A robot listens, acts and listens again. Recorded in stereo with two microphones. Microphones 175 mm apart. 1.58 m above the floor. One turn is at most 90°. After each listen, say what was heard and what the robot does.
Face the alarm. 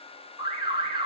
The alarm: about 30° right or 150° right. Turn 30° right.
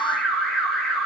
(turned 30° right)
Facing the alarm, 1 to 2 m away.